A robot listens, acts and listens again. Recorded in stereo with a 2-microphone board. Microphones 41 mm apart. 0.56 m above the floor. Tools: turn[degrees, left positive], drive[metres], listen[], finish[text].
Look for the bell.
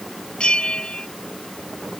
Thought: The bell: about 25° left or 155° left.
Action: turn[25]
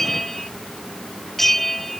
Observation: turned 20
Action: finish[Found it: a bell, straight ahead.]